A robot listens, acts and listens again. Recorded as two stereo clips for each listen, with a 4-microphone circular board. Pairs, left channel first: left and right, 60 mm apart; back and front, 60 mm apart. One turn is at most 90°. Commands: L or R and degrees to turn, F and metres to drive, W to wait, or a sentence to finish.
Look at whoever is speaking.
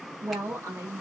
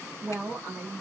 R50
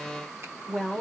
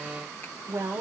L20
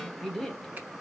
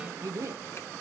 Facing the woman speaking.